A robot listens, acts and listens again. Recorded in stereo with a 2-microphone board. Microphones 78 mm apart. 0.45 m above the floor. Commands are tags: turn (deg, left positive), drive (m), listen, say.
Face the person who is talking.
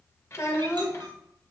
<turn deg="40"/>
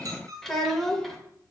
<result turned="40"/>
<say>Found it: a child speaking, straight ahead, under 1 m away.</say>